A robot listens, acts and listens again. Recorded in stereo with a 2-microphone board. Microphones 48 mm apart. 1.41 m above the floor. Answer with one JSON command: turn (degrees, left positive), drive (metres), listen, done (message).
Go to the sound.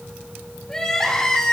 {"turn": 30}
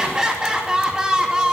{"turn": -15}
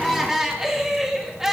{"turn": -10}
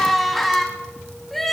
{"drive": 1.0}
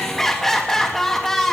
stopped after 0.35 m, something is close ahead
{"turn": 10}
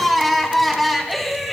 {"done": "Something is in my way. I am facing the crying but have not reached it."}